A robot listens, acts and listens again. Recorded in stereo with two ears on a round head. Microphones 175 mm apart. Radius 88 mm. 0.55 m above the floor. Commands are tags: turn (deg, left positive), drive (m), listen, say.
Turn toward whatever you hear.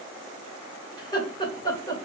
<turn deg="20"/>
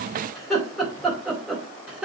<say>Facing the laughter.</say>